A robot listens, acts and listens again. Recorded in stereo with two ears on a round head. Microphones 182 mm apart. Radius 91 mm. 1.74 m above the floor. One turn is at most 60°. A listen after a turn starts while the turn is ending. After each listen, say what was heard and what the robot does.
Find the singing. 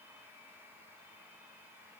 Keep listening.
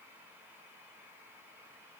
Keep listening.
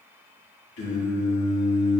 The singing: about 65° left or 115° left. Turn 60° left.
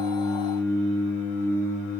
So it is at 45° left. Turn 45° left.
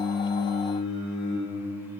Facing the singing.